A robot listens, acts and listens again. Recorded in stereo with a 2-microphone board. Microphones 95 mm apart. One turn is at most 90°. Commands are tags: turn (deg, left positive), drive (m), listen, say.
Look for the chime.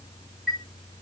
<turn deg="30"/>
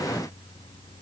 <listen/>
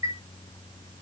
<turn deg="-30"/>
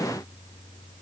<listen/>
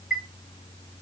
<say>Found it: a chime, straight ahead, 2 to 4 m away.</say>